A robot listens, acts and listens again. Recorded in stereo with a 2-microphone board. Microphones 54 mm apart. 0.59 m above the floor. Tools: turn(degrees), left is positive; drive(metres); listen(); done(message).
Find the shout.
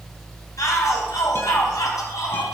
turn(degrees=90)
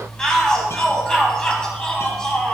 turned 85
turn(degrees=10)
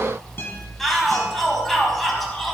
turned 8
done("Facing the shout.")